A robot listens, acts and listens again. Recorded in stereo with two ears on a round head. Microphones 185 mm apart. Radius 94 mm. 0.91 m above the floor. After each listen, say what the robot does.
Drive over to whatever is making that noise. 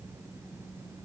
Keep listening.
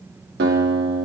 Turn 55° right.
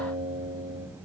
Turn 65° right.
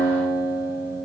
Drive 1.0 m forward.
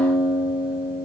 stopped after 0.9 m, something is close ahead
Arrived at the guitar, straight ahead.